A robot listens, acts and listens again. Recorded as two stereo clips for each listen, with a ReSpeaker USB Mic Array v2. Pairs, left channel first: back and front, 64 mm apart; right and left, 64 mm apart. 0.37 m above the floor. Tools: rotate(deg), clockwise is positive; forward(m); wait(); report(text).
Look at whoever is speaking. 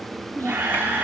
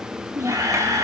rotate(-125)
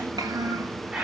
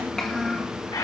rotate(10)
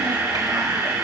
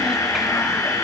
wait()
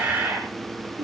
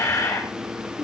report("Facing the child speaking, 2 to 4 m away.")